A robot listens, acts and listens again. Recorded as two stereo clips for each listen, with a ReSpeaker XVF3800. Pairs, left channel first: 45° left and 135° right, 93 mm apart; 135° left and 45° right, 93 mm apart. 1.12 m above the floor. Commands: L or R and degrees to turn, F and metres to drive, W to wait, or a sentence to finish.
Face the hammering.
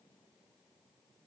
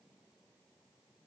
W
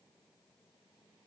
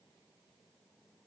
W
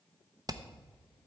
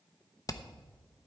L180
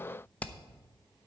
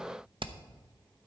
R30
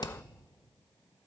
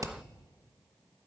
L10
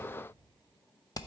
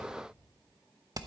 Found it: hammering, straight ahead.